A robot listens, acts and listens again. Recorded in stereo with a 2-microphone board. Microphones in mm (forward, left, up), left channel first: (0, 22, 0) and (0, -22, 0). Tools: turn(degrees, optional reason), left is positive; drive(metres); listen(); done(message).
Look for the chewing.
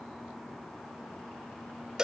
listen()
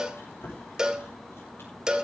turn(degrees=75, reason="The chewing: about 75° left or 105° left.")
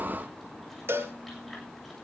listen()
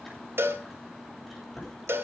done("Found it: chewing, straight ahead, over 4 m away.")